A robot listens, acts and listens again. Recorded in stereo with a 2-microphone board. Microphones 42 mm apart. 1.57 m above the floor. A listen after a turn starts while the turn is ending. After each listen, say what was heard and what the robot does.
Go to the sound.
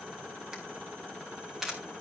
Turn 30° right.
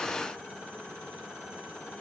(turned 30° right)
Keep listening.
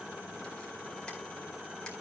Keep listening.
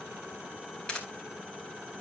So it is at 20° left. Turn 20° left.
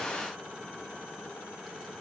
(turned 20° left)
Keep listening.
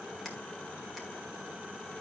Drive 1.0 m forward.
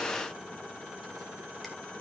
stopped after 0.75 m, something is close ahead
Keep listening.
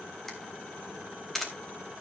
Blocked. The camera shutter is further on, straight ahead.